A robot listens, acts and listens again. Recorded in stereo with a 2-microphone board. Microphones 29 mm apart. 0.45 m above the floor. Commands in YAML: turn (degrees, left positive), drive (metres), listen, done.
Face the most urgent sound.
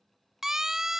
turn: -15
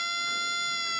done: "Facing the siren."